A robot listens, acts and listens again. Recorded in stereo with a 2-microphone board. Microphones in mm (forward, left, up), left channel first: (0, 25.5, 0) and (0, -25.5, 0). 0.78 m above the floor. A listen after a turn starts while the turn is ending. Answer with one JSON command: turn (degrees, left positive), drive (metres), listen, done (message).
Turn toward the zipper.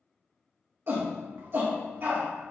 {"listen": true}
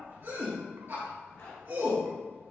{"turn": 65}
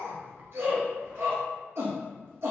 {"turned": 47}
{"listen": true}
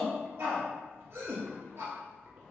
{"listen": true}
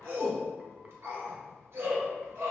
{"done": "I heard a zipper, but can't make it out now. It was about 20° left or 65° left."}